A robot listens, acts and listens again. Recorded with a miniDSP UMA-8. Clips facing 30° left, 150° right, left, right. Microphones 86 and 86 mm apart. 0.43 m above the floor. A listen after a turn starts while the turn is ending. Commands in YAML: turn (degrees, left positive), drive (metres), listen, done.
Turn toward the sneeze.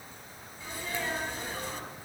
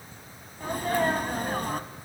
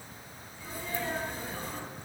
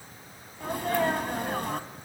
turn: -115
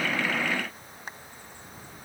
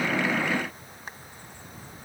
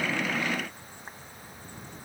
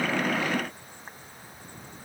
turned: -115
done: "Facing where the sneeze came from. I can't hear it now."